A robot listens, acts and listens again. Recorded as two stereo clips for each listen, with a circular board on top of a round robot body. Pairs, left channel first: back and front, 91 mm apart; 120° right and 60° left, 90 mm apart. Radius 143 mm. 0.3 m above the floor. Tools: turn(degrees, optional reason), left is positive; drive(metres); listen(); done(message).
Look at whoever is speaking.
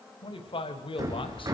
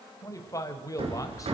turn(degrees=-170, reason="The man speaking: 170° right.")
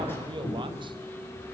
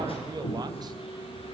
listen()
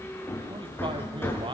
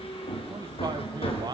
listen()
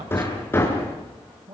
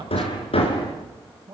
turn(degrees=25, reason="The man speaking is now 25° left.")
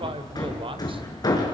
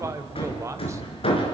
done("Facing the man speaking, 2 to 4 m away.")